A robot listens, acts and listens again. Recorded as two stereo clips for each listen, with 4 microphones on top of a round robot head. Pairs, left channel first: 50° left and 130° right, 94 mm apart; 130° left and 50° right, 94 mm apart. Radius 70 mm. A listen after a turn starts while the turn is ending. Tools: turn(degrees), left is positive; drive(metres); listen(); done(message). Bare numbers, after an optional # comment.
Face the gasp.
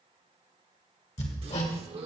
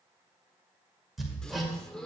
# The gasp: 150° right.
turn(-150)
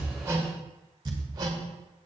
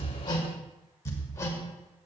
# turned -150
done("Facing where the gasp came from. I can't hear it now.")